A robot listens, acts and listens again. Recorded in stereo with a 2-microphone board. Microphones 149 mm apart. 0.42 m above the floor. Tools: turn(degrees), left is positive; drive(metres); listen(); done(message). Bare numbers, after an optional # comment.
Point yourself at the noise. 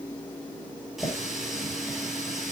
turn(30)
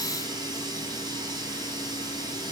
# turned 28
# So it is at 30° right.
turn(-30)
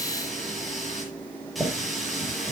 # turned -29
done("Facing the running tap.")